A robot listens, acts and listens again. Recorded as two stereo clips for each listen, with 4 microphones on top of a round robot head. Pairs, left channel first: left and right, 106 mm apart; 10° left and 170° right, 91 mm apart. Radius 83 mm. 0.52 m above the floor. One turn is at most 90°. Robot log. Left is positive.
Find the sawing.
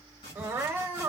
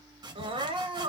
note: The sawing: 145° left.
cmd yaw +90
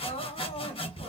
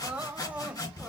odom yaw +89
note: The sawing is now 55° left.
cmd yaw +55
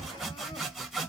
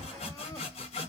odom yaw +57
end: Facing the sawing, 1 to 2 m away.